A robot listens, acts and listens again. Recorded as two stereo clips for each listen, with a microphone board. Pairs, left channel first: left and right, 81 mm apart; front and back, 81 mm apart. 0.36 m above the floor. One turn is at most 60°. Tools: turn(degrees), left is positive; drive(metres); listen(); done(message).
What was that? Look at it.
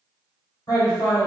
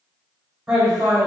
turn(degrees=60)
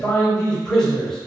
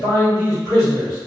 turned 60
done("Found it: a man speaking, straight ahead, 1 to 2 m away.")